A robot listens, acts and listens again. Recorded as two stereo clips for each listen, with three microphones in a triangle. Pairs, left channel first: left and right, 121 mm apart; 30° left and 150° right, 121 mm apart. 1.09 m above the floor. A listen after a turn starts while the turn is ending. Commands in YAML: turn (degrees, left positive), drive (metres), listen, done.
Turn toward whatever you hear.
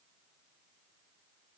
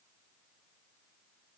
listen: true
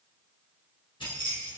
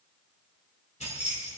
turn: 45
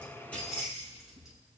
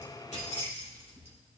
done: "Facing the keys jangling."